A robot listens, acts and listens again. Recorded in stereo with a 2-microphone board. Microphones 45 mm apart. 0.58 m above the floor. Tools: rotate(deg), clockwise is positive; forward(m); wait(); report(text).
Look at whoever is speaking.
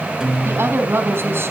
rotate(60)
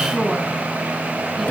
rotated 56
report("Facing the woman speaking.")